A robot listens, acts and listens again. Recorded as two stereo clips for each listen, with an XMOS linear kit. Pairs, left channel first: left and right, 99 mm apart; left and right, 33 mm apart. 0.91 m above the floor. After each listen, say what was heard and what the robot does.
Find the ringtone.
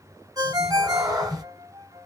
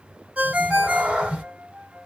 The ringtone: about 40° right or 140° right. Turn 40° right.
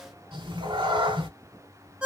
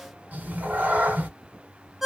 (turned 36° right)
So it is at 10° right. Turn 10° right.
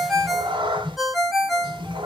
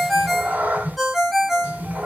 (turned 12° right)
Facing the ringtone, under 1 m away.